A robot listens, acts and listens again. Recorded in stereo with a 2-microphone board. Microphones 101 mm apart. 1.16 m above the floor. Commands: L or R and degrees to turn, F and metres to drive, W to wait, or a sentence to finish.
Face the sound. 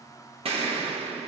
R65
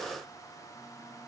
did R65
W
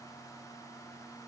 I heard an explosion, but can't make it out now. It was about straight ahead or 50° right.